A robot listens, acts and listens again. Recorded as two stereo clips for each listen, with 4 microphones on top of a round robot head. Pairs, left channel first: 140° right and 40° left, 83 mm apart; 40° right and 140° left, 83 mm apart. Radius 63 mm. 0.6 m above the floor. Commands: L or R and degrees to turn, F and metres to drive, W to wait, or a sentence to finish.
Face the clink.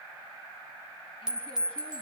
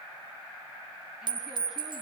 L120
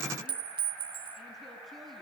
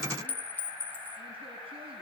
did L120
L30
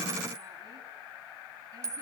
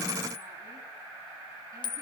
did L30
R15
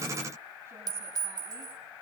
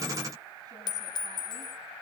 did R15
Found it: a clink, straight ahead.